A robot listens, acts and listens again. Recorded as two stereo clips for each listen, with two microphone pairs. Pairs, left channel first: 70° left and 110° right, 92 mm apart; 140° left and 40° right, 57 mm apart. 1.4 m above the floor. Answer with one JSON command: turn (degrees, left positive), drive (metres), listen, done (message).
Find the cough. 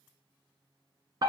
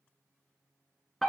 {"listen": true}
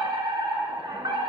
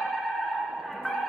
{"listen": true}
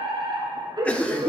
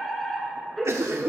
{"done": "Found it: a cough, straight ahead."}